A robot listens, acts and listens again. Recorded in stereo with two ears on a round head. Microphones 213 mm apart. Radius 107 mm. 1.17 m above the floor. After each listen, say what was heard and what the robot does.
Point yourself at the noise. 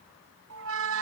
The squeak: about 60° right or 120° right. Turn 60° right.
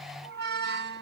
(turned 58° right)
So it is at 50° right. Turn 50° right.
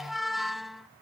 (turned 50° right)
Found it: a squeak, straight ahead.